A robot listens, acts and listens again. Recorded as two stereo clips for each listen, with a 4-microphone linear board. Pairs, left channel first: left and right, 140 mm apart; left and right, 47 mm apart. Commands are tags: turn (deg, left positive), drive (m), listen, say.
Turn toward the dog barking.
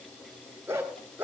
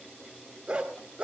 <turn deg="-15"/>
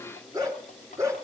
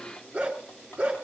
<turn deg="-20"/>
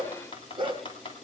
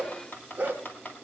<turn deg="-35"/>
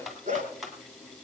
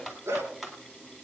<turn deg="-115"/>
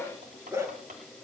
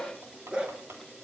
<turn deg="-20"/>
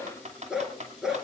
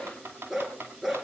<say>Found it: a dog barking, straight ahead, 2 to 4 m away.</say>